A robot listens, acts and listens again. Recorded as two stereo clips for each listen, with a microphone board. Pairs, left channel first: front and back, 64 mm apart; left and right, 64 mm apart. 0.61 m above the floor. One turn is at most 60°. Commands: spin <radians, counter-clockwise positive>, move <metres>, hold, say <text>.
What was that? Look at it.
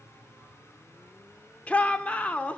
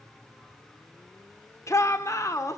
spin 1.05
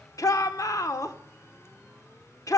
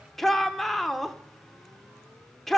say Found it: a shout, straight ahead.